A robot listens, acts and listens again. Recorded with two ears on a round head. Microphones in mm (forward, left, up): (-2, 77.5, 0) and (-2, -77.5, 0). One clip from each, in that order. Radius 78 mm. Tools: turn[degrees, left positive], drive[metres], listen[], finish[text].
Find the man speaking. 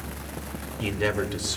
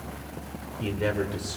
Thought: The man speaking: about 40° left or 140° left.
Action: turn[40]
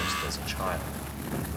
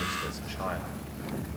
Action: listen[]
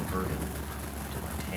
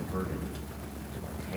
Action: listen[]
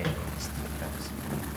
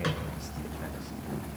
Action: finish[I heard a man speaking, but can't make it out now. It was about straight ahead or 100° left.]